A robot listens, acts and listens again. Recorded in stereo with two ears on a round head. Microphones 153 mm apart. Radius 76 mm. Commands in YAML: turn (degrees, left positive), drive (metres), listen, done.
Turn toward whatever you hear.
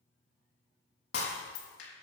turn: 70
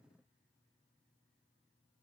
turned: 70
listen: true
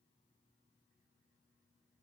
done: "I heard breaking glass, but can't make it out now. It was about straight ahead or 40° left."